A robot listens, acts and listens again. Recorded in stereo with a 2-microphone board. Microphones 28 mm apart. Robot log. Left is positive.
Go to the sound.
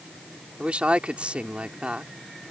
note: The woman speaking: about 50° right or 130° right.
cmd yaw -50
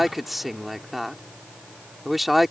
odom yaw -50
cmd fwd 1.0
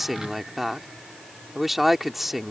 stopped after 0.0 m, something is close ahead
end: Blocked. The woman speaking is further on, straight ahead.